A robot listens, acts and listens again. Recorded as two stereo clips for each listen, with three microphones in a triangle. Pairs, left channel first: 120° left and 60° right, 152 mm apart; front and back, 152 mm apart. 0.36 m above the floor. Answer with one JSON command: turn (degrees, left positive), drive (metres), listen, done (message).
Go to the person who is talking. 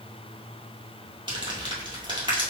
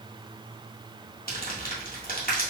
{"listen": true}
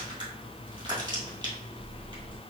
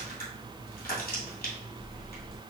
{"listen": true}
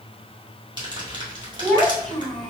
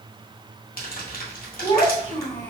{"turn": 35}
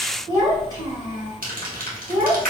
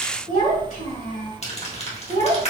{"drive": 1.0}
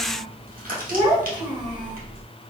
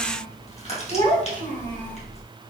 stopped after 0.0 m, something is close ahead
{"done": "Something is in my way. I am facing the child speaking but have not reached it."}